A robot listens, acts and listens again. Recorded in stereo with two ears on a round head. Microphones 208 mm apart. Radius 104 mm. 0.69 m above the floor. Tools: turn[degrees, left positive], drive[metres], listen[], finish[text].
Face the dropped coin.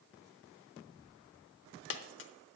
Thought: The dropped coin: about 50° left or 130° left.
Action: turn[50]
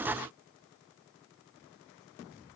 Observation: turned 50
Action: listen[]
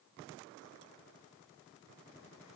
Action: finish[I heard a dropped coin, but can't make it out now. It was about straight ahead or 80° left.]